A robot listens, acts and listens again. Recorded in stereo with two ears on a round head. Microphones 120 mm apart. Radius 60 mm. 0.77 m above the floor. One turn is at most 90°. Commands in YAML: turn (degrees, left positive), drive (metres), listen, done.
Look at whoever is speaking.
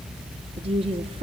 turn: -40
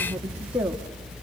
turn: -10
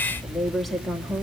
done: "Facing the woman speaking."